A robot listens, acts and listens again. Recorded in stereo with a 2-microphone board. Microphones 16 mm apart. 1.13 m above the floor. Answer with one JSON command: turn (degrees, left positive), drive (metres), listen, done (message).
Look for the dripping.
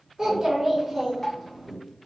{"turn": 35}
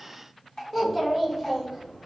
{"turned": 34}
{"turn": 105}
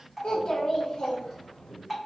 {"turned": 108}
{"done": "Found it: dripping, straight ahead."}